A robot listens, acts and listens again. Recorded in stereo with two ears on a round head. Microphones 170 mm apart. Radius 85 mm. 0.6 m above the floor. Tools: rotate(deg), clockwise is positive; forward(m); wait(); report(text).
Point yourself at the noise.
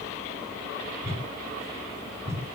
rotate(30)
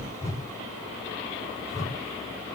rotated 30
rotate(-20)
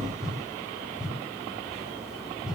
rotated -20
report("Found it: a whoosh, straight ahead, 2 to 4 m away.")